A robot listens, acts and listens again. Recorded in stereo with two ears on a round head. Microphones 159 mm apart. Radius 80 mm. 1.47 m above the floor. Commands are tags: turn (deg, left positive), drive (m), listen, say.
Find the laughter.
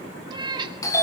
<listen/>
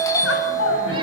<turn deg="90"/>
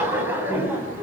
<turn deg="-10"/>
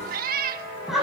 <say>Found it: laughter, straight ahead.</say>